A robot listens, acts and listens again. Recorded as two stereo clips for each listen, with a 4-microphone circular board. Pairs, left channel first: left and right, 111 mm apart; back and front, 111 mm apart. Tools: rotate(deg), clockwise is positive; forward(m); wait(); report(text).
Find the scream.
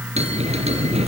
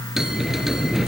wait()
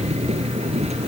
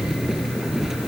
wait()
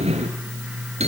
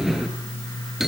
report("I can't make out a scream to turn to.")